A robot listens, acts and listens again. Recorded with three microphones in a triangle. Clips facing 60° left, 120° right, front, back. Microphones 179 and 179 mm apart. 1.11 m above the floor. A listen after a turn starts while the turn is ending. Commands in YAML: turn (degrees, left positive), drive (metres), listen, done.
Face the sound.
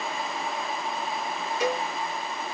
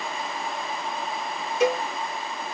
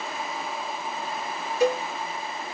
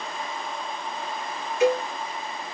turn: -55
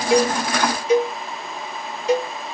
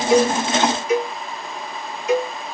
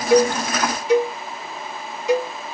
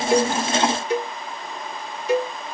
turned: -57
done: "Facing the cowbell, 1 to 2 m away."